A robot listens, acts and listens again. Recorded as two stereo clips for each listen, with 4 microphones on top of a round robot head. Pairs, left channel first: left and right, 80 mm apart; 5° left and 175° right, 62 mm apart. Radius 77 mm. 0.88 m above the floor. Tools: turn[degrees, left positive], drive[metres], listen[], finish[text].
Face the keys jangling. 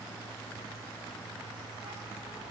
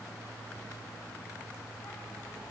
Action: listen[]
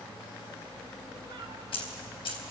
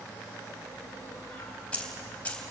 Thought: The keys jangling: 75° left.
Action: turn[75]
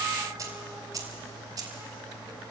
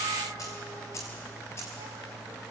Thought: The keys jangling is now 50° right.
Action: turn[-50]
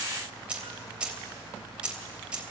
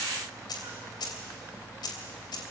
Thought: The keys jangling is now 15° right.
Action: turn[-15]
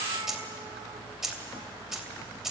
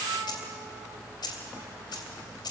Action: finish[Facing the keys jangling, 2 to 4 m away.]